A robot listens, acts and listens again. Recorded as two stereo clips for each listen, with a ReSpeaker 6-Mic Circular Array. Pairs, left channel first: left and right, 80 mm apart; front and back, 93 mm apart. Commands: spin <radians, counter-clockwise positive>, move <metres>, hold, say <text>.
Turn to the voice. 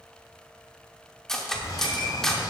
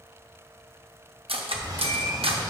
spin -0.96
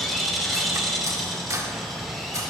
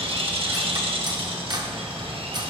say Found it: a child speaking, straight ahead, 1 to 2 m away.